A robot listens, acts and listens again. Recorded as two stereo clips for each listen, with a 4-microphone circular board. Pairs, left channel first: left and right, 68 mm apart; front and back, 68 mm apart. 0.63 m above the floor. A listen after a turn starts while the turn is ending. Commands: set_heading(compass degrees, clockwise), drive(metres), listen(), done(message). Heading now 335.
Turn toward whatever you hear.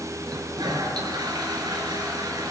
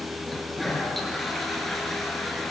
set_heading(65)
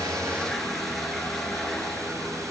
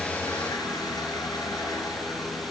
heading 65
listen()
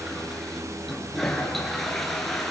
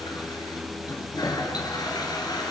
done("Facing the toilet flushing.")